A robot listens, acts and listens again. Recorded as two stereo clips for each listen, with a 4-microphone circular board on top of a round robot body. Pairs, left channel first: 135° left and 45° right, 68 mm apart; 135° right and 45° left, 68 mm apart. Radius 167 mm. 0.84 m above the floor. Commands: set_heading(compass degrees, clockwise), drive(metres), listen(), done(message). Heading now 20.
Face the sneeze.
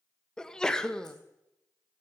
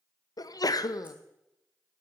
set_heading(165)
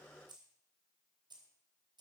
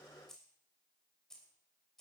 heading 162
done("Facing where the sneeze came from. I can't hear it now.")